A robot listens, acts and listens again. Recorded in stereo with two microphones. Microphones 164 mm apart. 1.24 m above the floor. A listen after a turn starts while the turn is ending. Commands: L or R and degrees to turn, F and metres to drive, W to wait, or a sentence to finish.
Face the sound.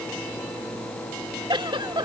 R30
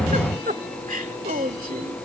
R120
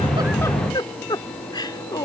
L25
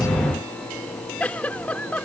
L10
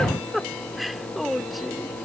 Found it: a giggle, straight ahead.